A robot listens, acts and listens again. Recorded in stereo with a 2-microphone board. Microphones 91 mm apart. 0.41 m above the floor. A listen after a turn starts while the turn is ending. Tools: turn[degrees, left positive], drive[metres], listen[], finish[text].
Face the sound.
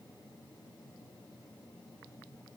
Action: listen[]
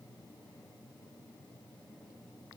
Action: listen[]
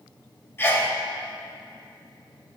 Thought: The sneeze: about 25° left or 155° left.
Action: turn[25]
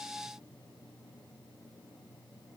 Action: listen[]
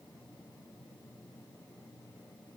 Action: finish[I heard a sneeze, but can't make it out now. It was about straight ahead or 130° left.]